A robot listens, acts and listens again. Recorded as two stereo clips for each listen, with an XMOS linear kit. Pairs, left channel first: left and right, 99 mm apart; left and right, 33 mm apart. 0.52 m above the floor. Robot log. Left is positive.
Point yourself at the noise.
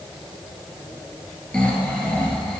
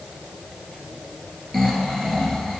cmd yaw +30
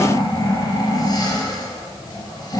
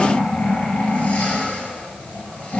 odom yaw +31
note: So it is at 140° left.
cmd yaw +140
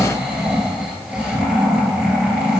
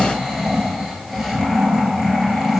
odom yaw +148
note: The snoring is now 10° right.
cmd yaw -10
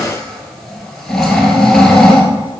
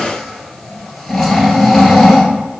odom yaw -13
end: Found it: snoring, straight ahead, 1 to 2 m away.